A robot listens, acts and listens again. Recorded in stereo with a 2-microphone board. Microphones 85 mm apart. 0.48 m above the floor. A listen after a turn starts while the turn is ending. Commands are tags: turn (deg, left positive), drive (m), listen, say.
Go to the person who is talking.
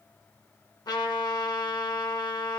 <listen/>
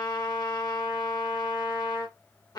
<listen/>
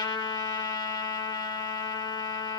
<say>I can't make out anyone speaking, only a trumpet.</say>